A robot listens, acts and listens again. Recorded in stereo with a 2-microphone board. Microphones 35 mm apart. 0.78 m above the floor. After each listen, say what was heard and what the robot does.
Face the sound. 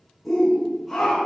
Turn 30° left.
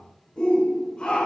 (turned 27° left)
So it is at 150° left. Turn 150° left.
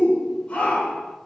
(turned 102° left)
The shout is now 50° left. Turn 50° left.
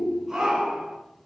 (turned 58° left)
The shout is now 10° right. Turn 10° right.
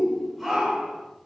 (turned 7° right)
Found it: a shout, straight ahead.